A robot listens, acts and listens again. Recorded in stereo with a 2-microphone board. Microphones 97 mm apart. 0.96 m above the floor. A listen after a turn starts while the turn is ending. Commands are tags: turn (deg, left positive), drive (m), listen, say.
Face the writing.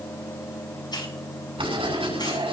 <turn deg="-70"/>
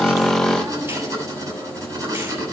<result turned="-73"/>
<turn deg="-35"/>
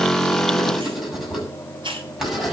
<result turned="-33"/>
<say>Found it: writing, straight ahead, over 4 m away.</say>